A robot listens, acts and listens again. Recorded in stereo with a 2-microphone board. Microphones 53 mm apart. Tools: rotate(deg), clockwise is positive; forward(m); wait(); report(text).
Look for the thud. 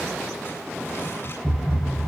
rotate(-30)
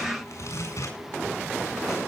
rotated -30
wait()
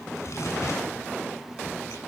report("I heard a thud, but can't make it out now. It was about 30° right or 150° left.")